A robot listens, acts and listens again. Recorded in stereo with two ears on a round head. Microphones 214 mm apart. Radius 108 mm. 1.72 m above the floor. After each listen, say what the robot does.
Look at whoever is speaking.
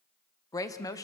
Turn 15° left.
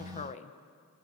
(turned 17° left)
Turn 150° left.
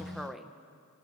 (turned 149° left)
Facing the woman speaking, 1 to 2 m away.